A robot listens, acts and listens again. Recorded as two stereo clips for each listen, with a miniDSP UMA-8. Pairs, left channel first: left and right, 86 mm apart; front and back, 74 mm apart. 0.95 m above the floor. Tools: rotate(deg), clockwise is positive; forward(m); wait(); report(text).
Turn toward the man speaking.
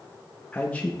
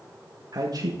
rotate(-165)
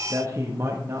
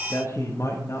rotate(35)
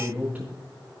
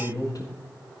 rotate(20)
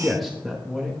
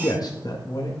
report("Facing the man speaking, 1 to 2 m away.")